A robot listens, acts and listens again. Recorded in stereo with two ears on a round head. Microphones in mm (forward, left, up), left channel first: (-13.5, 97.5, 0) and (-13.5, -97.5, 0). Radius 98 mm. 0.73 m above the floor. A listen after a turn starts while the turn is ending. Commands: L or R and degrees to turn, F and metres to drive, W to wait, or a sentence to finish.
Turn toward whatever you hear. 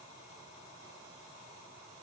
W
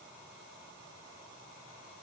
W
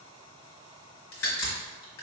L75
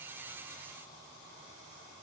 W
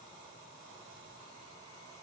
I heard a crack, but can't make it out now. It was about straight ahead or 30° left.